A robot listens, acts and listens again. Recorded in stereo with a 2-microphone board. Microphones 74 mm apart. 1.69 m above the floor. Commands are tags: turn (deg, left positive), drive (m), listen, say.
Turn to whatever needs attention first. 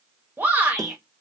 <turn deg="-25"/>
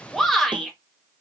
<say>Facing the shout.</say>